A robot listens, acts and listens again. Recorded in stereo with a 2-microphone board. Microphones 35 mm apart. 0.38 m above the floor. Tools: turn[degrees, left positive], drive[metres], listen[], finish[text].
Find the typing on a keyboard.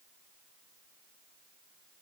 Action: listen[]
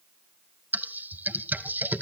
Thought: The typing on a keyboard: about 65° right or 115° right.
Action: turn[-65]
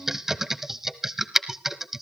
Thought: So it is at 10° right.
Action: turn[-10]
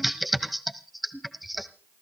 Action: finish[Found it: typing on a keyboard, straight ahead, 1 to 2 m away.]